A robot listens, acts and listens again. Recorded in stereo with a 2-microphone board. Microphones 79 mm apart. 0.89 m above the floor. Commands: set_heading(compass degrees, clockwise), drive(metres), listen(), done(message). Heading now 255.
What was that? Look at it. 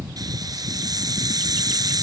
set_heading(310)
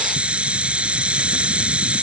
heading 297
set_heading(312)
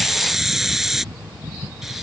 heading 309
done("Facing the hiss.")